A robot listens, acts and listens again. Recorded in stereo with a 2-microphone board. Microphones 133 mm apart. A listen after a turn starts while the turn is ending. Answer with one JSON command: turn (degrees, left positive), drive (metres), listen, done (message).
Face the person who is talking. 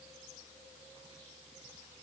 {"listen": true}
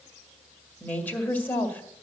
{"turn": 30}
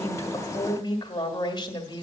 {"turn": 135}
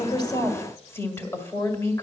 {"turn": 25}
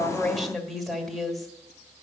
{"done": "Found it: a woman speaking, straight ahead."}